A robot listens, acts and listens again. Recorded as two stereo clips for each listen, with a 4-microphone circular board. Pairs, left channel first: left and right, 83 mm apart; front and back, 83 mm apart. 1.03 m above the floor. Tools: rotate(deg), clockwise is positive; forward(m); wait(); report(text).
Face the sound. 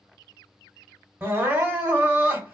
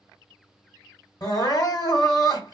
rotate(30)
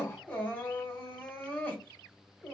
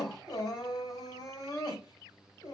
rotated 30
rotate(-20)
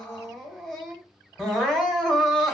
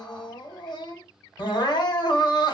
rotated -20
report("Facing the crying, 1 to 2 m away.")